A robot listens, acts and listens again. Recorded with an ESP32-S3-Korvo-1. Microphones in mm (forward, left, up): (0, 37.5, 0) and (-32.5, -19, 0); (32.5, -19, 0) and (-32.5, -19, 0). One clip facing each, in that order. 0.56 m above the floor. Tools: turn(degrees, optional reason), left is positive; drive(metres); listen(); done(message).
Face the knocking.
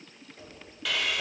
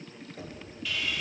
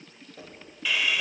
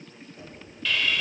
turn(degrees=-60, reason="The knocking: 60° right.")
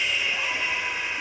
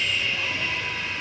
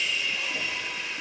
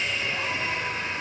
listen()
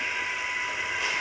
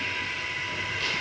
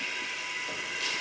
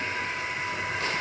listen()
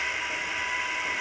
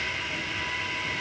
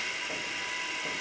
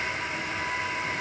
done("I heard knocking from this way, but can't make it out now.")